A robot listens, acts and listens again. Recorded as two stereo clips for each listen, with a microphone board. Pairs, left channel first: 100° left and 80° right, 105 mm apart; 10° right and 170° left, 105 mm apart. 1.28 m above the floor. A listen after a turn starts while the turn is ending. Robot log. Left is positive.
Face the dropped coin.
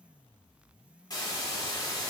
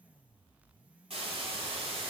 cmd idle
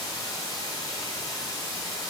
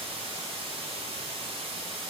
cmd idle
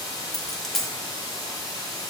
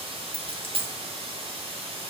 note: The dropped coin: 170° right.
cmd yaw -170
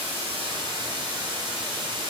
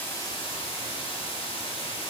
end: Facing where the dropped coin came from. I can't hear it now.